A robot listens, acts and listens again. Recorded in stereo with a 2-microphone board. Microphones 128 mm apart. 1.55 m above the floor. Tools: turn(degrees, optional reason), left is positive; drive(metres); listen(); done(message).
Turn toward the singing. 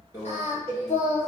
turn(degrees=60, reason="The singing: about 60° left or 120° left.")
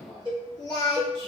turn(degrees=35, reason="So it is at 35° left.")
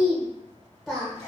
done("Found it: singing, straight ahead.")